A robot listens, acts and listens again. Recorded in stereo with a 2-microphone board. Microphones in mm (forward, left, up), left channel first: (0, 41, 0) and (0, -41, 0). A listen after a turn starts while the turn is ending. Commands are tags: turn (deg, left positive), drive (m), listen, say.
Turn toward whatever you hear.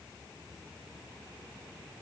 <listen/>
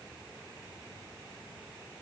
<listen/>
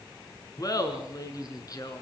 <turn deg="45"/>
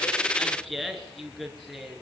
<say>Found it: laughter, straight ahead, over 4 m away.</say>